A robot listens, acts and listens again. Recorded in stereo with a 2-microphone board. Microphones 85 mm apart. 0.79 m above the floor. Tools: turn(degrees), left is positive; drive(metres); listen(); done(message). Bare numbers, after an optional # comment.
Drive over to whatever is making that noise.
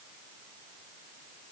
listen()
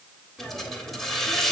turn(30)
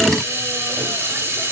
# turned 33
# So it is at 30° right.
turn(-30)
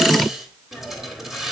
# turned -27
drive(1.0)
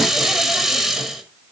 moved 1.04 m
drive(1.0)
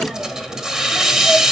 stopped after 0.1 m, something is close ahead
# The hiss is now 10° right.
turn(-10)
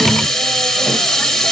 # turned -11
done("I am next to the hiss.")